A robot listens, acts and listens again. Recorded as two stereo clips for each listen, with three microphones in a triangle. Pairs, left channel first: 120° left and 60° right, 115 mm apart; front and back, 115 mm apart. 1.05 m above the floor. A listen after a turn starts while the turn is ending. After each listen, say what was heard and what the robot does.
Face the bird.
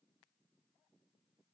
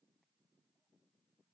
Keep listening.
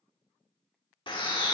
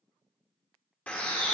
The bird: 75° left. Turn 75° left.
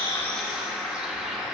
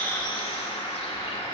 The bird is now 25° left. Turn 25° left.
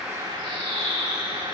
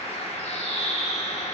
The bird is now 15° right. Turn 15° right.
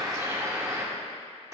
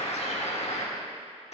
Facing the bird.